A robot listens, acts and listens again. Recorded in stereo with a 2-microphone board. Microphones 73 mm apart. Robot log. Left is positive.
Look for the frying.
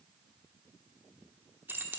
cmd idle
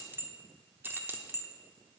cmd idle
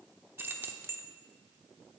end: I can't make out frying to turn to.